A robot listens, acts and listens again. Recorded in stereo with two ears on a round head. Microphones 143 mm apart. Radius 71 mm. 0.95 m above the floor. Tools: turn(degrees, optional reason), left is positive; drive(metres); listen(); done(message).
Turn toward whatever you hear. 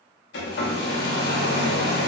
turn(degrees=90)
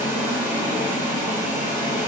turn(degrees=-15, reason="So it is at 15° right.")
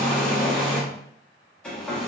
done("Facing the hair dryer.")